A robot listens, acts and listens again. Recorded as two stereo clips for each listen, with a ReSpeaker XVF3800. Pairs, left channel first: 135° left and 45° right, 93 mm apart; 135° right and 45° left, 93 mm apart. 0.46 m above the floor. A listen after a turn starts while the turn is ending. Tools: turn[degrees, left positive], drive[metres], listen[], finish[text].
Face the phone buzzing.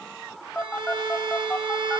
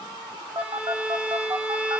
Thought: The phone buzzing: 55° left.
Action: turn[55]
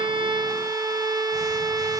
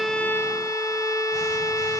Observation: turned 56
Action: listen[]
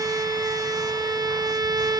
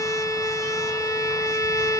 Action: listen[]
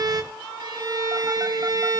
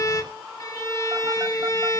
Action: finish[I heard a phone buzzing from this way, but can't make it out now.]